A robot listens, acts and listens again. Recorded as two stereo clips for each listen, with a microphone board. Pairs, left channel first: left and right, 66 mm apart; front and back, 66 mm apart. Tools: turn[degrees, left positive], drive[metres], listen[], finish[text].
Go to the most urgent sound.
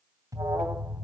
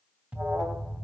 Thought: The alarm: 115° right.
Action: turn[-115]
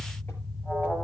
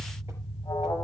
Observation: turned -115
Thought: The alarm is now 10° left.
Action: turn[10]
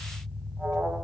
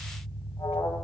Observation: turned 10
Thought: The alarm is now 10° right.
Action: turn[-10]
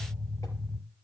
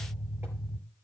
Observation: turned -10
Action: drive[1.0]
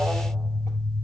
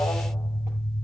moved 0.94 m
Thought: The alarm is now 10° right.
Action: turn[-10]
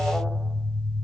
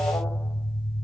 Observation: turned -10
Action: drive[1.0]
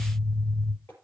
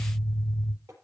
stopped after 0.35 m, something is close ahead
Action: finish[Arrived at the alarm, straight ahead.]